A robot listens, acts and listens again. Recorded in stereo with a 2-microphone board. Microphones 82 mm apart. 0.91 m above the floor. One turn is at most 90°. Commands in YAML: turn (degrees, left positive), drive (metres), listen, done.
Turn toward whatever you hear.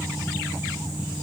listen: true
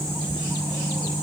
listen: true
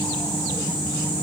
done: "I can't make out anything to turn to."